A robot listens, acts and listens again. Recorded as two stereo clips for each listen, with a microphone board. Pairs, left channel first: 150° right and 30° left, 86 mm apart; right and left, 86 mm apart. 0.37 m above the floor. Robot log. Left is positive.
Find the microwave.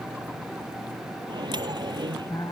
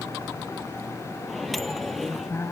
end: Facing the microwave.